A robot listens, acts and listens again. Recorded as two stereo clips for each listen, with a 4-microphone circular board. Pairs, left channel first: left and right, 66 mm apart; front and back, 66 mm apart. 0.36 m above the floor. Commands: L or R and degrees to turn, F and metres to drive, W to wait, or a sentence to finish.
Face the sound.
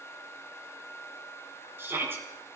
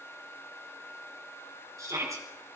R145
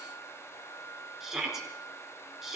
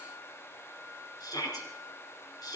R10
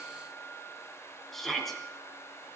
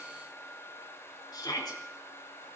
Facing the shout.